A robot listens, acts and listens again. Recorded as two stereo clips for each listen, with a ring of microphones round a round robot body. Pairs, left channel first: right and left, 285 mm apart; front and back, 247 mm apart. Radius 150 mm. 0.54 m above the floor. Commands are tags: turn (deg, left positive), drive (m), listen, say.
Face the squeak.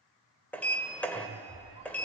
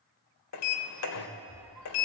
<turn deg="-145"/>
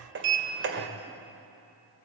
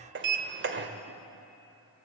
<listen/>
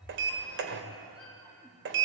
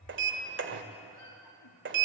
<say>Found it: a squeak, straight ahead, over 4 m away.</say>